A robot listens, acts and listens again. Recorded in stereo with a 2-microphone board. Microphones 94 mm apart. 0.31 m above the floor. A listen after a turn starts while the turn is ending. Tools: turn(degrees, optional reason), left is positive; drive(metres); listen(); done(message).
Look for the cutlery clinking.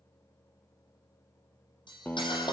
turn(degrees=55, reason="The cutlery clinking: about 55° left or 125° left.")
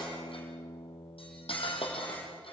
turn(degrees=75, reason="So it is at 75° left.")
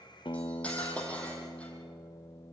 turn(degrees=15, reason="The cutlery clinking is now 15° left.")
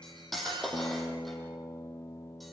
done("Found it: cutlery clinking, straight ahead, over 4 m away.")